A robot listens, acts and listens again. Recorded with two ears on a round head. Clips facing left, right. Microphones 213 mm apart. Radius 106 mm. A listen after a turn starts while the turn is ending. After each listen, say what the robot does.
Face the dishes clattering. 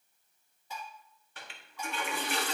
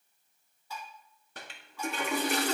Turn 20° left.
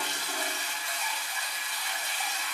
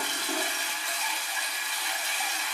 Keep listening.
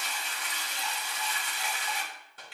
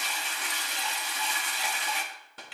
Keep listening.
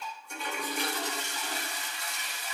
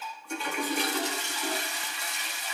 Facing the dishes clattering, 1 to 2 m away.